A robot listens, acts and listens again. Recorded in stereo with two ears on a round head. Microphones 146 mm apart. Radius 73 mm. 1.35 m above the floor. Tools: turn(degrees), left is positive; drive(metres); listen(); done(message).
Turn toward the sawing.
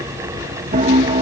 listen()
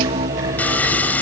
turn(degrees=30)
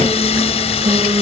turn(degrees=140)
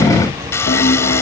turn(degrees=15)
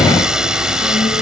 done("Found it: sawing, straight ahead.")